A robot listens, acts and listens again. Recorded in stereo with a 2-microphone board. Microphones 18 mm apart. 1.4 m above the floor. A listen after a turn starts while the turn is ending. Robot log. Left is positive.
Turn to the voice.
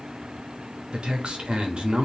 note: The man speaking: about 65° right or 115° right.
cmd yaw -65
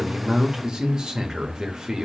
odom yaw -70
note: So it is at 40° right.
cmd yaw -40
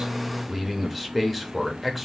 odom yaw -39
end: Found it: a man speaking, straight ahead, 1 to 2 m away.